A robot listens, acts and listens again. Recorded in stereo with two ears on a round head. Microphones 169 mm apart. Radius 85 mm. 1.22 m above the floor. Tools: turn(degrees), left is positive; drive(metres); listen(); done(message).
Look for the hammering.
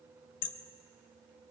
turn(degrees=70)
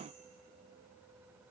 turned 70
listen()
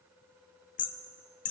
turn(degrees=40)
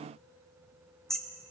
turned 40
done("Facing the hammering, under 1 m away.")